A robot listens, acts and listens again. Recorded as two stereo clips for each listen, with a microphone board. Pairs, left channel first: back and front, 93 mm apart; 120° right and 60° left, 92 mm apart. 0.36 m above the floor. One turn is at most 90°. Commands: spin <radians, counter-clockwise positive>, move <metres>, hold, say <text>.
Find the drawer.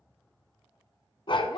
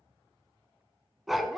hold
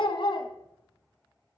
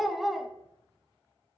hold
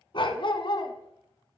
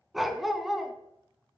say I can't make out a drawer to turn to.